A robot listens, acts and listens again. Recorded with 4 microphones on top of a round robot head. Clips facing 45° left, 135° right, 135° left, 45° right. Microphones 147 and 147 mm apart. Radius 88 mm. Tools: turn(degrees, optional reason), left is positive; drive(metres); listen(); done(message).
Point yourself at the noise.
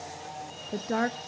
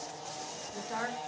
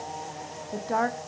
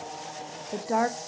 turn(degrees=35, reason="The woman speaking: 35° left.")
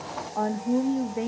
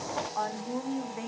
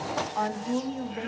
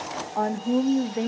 done("Found it: a woman speaking, straight ahead.")